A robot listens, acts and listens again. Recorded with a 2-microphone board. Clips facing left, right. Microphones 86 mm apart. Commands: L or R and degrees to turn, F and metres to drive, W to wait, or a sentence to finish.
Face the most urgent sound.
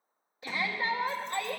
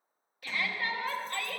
L20
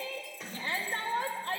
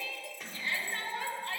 L135
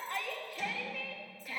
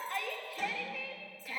Facing the shout, 1 to 2 m away.